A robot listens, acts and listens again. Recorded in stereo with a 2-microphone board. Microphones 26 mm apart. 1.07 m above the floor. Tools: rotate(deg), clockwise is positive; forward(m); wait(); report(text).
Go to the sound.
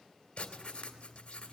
rotate(-45)
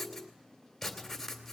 forward(1.0)
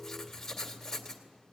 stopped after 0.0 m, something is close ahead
rotate(-10)
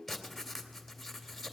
report("Something is in my way. I am facing the writing but have not reached it.")